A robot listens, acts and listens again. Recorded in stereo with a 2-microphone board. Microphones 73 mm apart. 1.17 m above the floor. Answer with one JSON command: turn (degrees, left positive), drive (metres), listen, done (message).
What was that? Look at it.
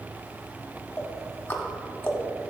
{"turn": 30}
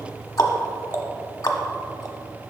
{"turn": 115}
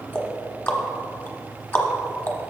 {"turn": 35}
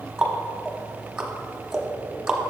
{"turn": -10}
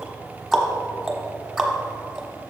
{"done": "Found it: ticking, straight ahead, 1 to 2 m away."}